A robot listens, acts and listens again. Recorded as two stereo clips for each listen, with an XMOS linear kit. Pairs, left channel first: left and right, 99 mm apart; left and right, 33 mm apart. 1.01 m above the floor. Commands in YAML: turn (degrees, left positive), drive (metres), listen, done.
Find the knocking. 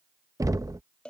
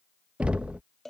turn: -35
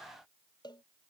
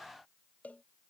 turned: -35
listen: true
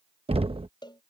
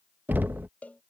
turn: -110
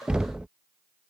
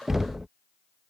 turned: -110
turn: -10
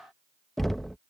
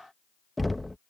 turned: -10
done: "Found it: knocking, straight ahead."